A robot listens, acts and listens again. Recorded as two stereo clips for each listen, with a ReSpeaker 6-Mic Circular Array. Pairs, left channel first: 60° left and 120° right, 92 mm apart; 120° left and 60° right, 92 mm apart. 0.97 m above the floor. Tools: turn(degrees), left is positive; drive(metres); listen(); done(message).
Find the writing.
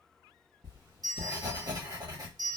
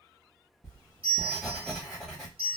turn(degrees=-155)
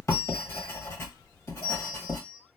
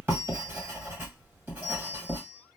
done("Found it: writing, straight ahead.")